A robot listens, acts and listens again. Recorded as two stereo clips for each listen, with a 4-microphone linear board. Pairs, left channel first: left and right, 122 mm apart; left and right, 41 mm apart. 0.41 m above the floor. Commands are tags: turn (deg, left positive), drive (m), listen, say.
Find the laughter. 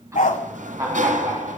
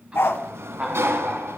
<turn deg="-30"/>
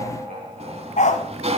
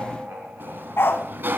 <turn deg="-120"/>
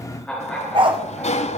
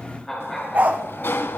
<say>Facing the laughter, over 4 m away.</say>